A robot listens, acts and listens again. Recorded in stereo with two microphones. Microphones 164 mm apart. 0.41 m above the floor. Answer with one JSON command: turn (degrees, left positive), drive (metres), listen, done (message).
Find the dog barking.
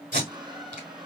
{"listen": true}
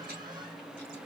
{"listen": true}
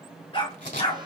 {"turn": 30}
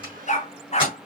{"turn": 135}
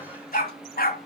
{"turn": 65}
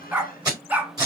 {"turn": -10}
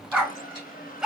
{"done": "Found it: a dog barking, straight ahead, 1 to 2 m away."}